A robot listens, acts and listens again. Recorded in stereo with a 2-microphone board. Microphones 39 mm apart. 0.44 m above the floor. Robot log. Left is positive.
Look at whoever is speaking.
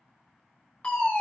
cmd idle
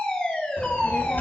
note: The child speaking: about 50° left or 130° left.
cmd yaw +50
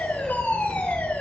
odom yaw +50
note: So it is at 15° left.
cmd yaw +15
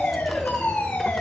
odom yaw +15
end: Found it: a child speaking, straight ahead, under 1 m away.